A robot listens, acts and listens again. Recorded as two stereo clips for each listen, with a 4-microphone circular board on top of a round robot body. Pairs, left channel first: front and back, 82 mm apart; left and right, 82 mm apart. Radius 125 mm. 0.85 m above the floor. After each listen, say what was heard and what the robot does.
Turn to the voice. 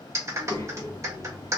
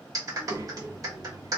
The child speaking: 45° right. Turn 45° right.
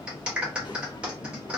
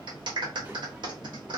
The child speaking is now 20° right. Turn 20° right.
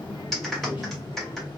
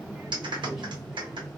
Facing the child speaking, 1 to 2 m away.